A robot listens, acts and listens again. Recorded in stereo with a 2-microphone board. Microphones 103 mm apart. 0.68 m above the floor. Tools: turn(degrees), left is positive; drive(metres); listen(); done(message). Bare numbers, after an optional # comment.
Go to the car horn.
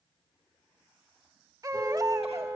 # The car horn: about 30° right or 150° right.
turn(-30)
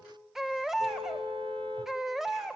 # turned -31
# So it is at 115° right.
turn(-115)
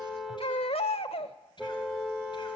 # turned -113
drive(1.0)
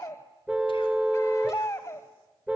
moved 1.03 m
# The car horn is now 15° right.
turn(-15)
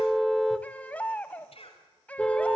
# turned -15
drive(1.0)
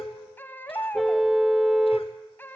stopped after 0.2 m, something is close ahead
done("I am next to the car horn.")